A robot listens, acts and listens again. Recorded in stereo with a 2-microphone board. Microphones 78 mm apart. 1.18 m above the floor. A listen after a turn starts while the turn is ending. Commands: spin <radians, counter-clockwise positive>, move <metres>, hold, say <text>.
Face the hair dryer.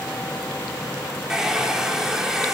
spin -0.52
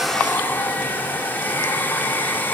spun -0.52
spin 0.44
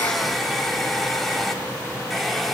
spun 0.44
say Found it: a hair dryer, straight ahead, 2 to 4 m away.